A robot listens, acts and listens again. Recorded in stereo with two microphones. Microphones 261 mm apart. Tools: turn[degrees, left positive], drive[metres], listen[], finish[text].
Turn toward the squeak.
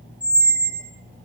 Action: turn[-90]
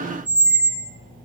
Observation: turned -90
Action: finish[Found it: a squeak, straight ahead.]